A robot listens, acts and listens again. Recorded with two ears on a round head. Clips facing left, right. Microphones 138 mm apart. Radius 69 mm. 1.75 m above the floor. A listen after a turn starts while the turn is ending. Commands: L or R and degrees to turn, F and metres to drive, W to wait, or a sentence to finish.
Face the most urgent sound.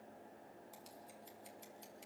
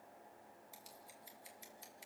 W
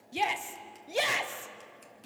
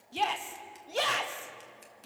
L30
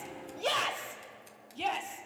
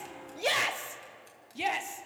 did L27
R15
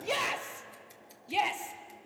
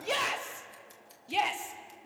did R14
Facing the shout.